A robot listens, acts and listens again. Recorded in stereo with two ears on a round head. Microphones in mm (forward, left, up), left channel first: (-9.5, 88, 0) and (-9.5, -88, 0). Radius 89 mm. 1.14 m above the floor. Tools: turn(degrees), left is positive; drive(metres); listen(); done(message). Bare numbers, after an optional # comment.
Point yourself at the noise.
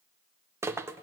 turn(-30)
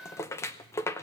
# So it is at 15° left.
turn(15)
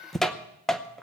done("Facing the rattle.")